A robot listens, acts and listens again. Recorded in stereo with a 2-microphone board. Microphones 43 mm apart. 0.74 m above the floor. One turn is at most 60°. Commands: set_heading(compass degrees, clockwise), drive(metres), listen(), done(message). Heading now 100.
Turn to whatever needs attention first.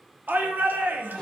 set_heading(145)
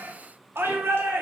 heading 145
set_heading(205)
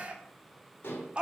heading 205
set_heading(230)
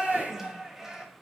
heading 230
set_heading(240)
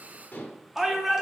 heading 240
done("Facing the shout.")